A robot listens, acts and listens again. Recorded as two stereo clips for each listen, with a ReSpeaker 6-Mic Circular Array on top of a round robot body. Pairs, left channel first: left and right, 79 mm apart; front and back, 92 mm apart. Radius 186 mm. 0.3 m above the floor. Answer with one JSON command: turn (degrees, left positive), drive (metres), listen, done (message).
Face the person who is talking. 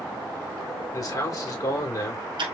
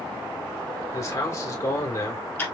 {"turn": 50}
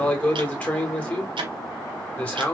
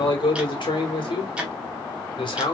{"turn": 20}
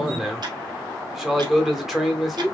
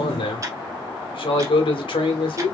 {"done": "Facing the man speaking, 1 to 2 m away."}